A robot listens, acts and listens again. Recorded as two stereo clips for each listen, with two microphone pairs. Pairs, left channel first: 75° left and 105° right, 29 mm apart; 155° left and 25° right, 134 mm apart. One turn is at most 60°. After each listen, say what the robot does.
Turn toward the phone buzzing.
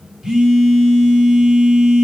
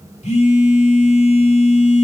Turn 60° right.
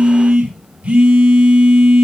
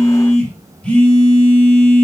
Turn 60° right.
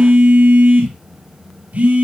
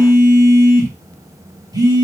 Turn 60° right.
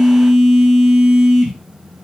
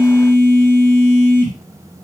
Turn 25° right.
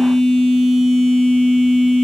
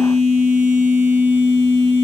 Facing the phone buzzing, 2 to 4 m away.